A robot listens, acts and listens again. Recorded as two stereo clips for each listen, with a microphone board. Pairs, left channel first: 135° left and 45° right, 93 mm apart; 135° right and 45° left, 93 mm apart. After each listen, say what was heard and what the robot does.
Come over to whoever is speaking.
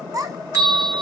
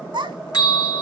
The child speaking: 10° left. Turn 10° left.
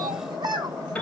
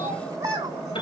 Drive 1.0 m forward.
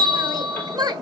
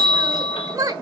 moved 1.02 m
Drive 1.0 m forward.
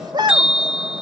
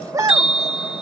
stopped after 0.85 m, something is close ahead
Arrived at the child speaking, straight ahead.